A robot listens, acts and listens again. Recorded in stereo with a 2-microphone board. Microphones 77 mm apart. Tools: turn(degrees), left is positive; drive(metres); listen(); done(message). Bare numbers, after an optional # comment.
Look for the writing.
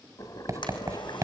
# The writing: about 45° right or 135° right.
turn(-45)
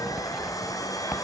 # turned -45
listen()
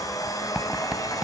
listen()
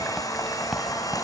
done("I heard writing, but can't make it out now. It was about straight ahead or 90° right.")